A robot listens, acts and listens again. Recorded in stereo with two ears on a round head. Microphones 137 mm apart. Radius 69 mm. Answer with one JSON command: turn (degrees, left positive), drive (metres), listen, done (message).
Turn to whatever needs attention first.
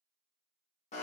{"listen": true}
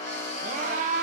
{"turn": -50}
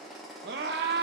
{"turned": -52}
{"turn": -75}
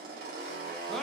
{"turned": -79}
{"done": "Facing the scream, under 1 m away."}